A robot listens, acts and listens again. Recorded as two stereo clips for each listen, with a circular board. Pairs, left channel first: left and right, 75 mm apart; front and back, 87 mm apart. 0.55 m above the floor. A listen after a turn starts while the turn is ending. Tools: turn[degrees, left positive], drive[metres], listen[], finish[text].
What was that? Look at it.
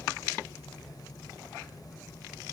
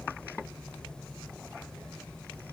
Action: listen[]
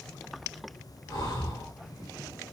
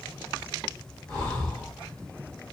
Thought: The breathing: 80° left.
Action: turn[80]
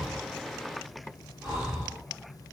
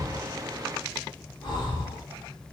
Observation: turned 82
Action: finish[Facing the breathing.]